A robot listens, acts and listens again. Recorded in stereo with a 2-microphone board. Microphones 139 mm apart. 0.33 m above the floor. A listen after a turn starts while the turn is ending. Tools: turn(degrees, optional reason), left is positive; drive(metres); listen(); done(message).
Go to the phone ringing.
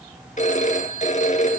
turn(degrees=60, reason="The phone ringing: about 60° left or 120° left.")
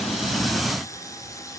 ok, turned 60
listen()
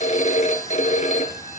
turn(degrees=60, reason="So it is at 60° left.")
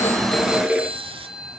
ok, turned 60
drive(metres=1.0)
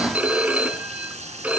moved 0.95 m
turn(degrees=-10, reason="The phone ringing is now 10° right.")
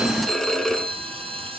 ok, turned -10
drive(metres=1.0)
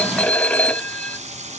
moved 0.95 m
turn(degrees=10, reason="The phone ringing is now 10° left.")
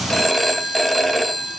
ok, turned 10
drive(metres=1.0)
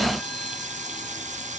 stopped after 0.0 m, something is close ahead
listen()
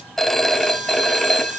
done("I am next to the phone ringing.")